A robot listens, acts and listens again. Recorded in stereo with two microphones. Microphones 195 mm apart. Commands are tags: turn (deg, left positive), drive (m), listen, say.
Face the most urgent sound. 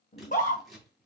<turn deg="40"/>
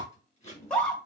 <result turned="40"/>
<say>Facing the scream.</say>